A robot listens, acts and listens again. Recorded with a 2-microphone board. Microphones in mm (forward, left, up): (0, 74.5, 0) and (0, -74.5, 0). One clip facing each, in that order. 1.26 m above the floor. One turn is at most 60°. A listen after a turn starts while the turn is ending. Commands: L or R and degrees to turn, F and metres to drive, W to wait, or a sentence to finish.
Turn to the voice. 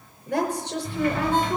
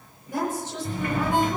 L60
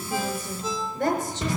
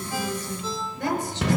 L50
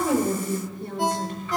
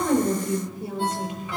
Found it: a woman speaking, straight ahead.